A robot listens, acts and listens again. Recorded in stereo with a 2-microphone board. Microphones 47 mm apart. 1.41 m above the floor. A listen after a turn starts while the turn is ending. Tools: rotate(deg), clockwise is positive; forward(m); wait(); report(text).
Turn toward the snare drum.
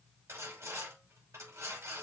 wait()
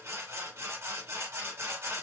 wait()
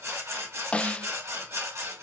rotate(-25)
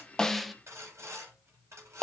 report("Facing the snare drum.")